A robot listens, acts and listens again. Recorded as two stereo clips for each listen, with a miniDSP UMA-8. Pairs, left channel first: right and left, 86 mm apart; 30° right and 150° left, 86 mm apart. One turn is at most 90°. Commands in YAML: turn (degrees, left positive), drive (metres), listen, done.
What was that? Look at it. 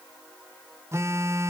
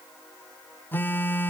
turn: 35
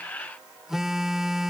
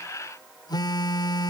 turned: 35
done: "Found it: a phone buzzing, straight ahead."